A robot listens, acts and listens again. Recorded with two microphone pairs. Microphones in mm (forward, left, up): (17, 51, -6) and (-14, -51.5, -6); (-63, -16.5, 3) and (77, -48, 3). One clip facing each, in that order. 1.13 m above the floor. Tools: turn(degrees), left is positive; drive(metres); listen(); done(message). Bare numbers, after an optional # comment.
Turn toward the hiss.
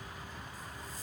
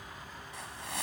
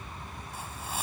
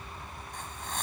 # The hiss: 110° right.
turn(-110)
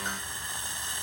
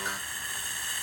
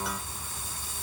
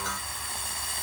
done("Found it: a hiss, straight ahead.")